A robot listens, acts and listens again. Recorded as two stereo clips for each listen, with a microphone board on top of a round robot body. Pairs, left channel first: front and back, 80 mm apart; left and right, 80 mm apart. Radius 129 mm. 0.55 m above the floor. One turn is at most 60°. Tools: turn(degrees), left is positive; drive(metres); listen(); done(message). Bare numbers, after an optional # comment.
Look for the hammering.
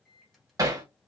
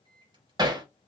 # The hammering: 130° right.
turn(-60)
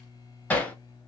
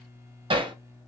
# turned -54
# The hammering is now 75° right.
turn(-60)
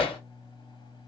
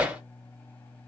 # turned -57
# The hammering is now 15° right.
turn(-15)
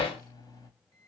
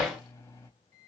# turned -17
done("Facing the hammering, under 1 m away.")